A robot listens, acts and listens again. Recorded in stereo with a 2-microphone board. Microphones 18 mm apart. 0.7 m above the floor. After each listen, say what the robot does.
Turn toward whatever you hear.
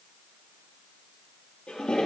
Turn 70° left.
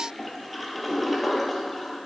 Found it: a toilet flushing, straight ahead.